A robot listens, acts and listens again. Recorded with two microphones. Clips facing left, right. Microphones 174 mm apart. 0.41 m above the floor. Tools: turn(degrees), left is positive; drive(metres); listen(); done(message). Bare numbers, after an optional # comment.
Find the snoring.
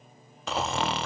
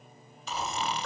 # The snoring: about 70° left or 110° left.
turn(70)
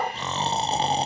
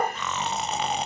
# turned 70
# So it is at 35° left.
turn(35)
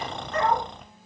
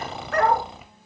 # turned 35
done("Facing the snoring.")